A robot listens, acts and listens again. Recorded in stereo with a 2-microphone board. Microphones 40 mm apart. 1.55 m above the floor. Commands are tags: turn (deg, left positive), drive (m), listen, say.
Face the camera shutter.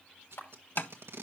<turn deg="90"/>
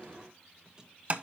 <listen/>
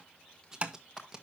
<turn deg="20"/>
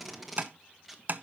<listen/>
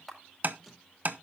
<say>Facing the camera shutter.</say>